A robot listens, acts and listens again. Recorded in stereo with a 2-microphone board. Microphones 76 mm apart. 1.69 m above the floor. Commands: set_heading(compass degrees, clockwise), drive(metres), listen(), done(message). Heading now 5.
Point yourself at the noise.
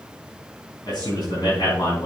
set_heading(295)
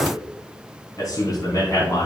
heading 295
set_heading(235)
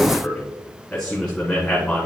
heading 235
set_heading(220)
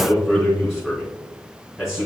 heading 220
done("Facing the man speaking.")